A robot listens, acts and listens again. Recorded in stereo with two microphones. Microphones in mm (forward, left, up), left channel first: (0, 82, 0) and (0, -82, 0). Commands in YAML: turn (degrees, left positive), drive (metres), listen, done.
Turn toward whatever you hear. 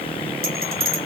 turn: -90
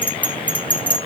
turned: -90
turn: 10
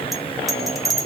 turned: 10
done: "Facing the bell."